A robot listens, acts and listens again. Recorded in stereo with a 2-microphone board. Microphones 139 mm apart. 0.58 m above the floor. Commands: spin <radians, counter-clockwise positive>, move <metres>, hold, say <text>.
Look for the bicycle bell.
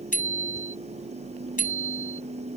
spin 1.31
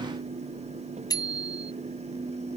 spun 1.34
spin 0.44
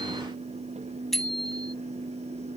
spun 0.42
say Found it: a bicycle bell, straight ahead.